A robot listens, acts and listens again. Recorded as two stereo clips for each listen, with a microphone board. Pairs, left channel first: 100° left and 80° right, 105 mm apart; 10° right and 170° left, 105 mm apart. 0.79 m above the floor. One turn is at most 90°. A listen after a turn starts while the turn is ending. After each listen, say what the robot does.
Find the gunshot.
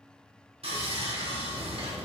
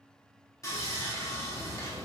Keep listening.
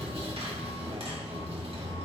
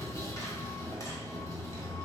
Keep listening.
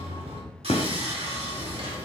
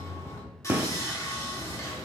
Turn 90° left.
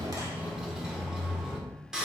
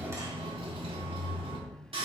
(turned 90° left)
Facing where the gunshot came from. I can't hear it now.